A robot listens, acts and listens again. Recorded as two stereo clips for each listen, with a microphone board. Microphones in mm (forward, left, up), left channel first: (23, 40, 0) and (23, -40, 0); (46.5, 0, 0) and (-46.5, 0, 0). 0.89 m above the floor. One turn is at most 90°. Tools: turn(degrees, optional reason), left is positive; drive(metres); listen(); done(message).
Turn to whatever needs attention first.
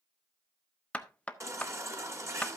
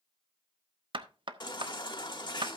turn(degrees=-35, reason="The baby crying: 35° right.")
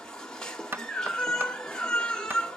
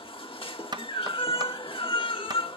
turn(degrees=10, reason="The baby crying is now 10° left.")
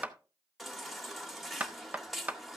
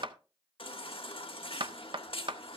done("Facing the baby crying, 1 to 2 m away.")